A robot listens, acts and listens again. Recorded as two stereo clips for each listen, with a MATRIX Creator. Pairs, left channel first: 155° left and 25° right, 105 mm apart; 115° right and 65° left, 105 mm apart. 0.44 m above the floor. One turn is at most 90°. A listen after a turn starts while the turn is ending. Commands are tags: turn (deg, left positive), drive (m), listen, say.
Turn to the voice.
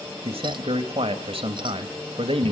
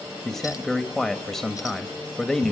<turn deg="-25"/>
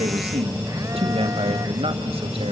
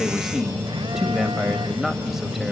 <turn deg="-20"/>
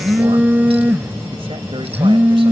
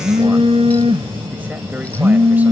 <listen/>
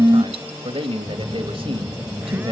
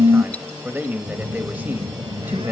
<say>Facing the man speaking, 1 to 2 m away.</say>